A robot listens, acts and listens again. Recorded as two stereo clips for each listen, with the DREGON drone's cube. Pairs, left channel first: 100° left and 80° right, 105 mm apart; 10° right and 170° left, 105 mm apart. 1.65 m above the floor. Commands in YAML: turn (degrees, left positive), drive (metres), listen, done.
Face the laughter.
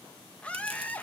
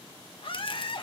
turn: 25
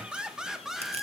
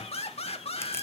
turn: 10
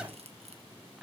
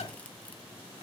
turn: 10
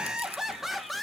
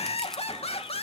turn: 10
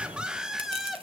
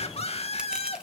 turn: 10
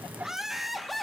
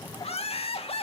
turn: 10
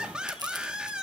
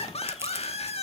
done: "Found it: laughter, straight ahead."